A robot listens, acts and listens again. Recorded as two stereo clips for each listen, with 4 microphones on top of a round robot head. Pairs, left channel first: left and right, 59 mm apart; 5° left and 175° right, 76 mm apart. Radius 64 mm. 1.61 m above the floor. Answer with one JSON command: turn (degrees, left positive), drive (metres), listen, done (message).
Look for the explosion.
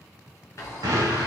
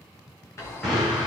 {"turn": -85}
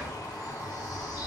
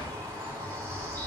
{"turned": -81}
{"done": "I heard an explosion from this way, but can't make it out now."}